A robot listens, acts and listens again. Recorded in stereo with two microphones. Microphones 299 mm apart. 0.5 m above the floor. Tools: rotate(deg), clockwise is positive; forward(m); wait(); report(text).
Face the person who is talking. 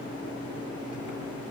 wait()
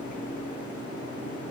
wait()
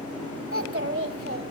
rotate(45)
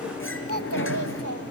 rotate(90)
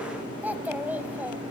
report("Found it: a child speaking, straight ahead.")